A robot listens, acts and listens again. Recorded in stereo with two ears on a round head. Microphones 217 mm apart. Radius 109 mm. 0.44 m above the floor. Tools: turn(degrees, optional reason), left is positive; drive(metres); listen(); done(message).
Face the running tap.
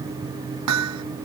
listen()
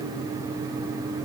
listen()
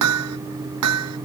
done("I can't make out a running tap to turn to.")